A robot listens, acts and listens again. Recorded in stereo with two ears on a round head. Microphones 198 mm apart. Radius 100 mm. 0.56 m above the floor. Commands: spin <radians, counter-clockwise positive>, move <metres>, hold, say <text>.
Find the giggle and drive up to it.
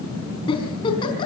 spin 0.44
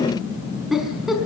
move 1.0
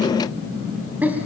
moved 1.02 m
move 1.0
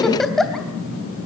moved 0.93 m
move 1.0
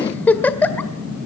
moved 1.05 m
spin 0.17
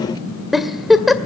move 1.0
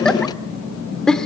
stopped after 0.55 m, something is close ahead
say I am next to the giggle.